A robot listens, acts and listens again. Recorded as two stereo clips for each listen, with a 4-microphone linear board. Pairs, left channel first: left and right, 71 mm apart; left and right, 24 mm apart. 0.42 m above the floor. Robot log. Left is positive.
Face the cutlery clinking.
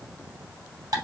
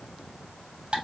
cmd idle
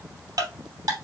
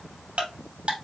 cmd idle
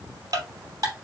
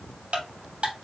end: I can't make out cutlery clinking to turn to.